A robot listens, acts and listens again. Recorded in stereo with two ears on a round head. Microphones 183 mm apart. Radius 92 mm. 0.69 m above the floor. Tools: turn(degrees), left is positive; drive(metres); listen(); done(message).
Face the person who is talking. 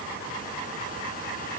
listen()
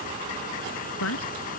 turn(degrees=70)
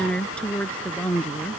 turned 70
done("Found it: a woman speaking, straight ahead.")